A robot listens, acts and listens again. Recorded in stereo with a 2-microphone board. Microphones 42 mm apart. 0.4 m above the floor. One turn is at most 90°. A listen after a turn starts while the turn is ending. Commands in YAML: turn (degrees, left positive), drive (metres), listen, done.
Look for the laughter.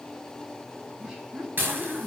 turn: -15
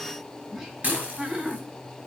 turn: -30
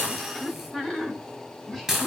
done: "Facing the laughter."